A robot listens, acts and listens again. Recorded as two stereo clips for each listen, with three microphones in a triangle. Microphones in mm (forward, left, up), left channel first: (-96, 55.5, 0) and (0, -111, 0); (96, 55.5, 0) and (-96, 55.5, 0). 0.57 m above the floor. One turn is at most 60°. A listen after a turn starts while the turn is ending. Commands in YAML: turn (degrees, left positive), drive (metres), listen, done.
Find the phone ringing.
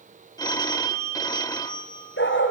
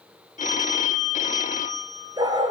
turn: 50
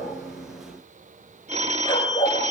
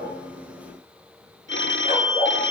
done: "Found it: a phone ringing, straight ahead, 1 to 2 m away."